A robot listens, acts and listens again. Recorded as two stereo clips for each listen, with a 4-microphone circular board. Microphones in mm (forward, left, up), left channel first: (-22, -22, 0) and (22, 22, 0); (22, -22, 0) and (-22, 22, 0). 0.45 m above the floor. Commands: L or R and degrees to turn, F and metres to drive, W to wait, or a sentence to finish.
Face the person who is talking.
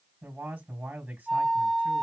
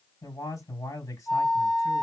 R25
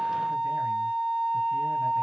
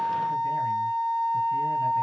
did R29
W
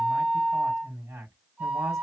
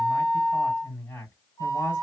Facing the man speaking, 2 to 4 m away.